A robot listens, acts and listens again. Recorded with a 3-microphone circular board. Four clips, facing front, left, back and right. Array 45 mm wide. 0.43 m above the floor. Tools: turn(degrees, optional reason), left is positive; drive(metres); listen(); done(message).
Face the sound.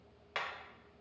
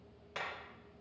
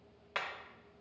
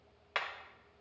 turn(degrees=-95, reason="The hammering: 95° right.")
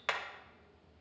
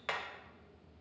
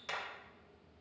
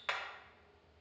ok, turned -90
done("Facing the hammering, under 1 m away.")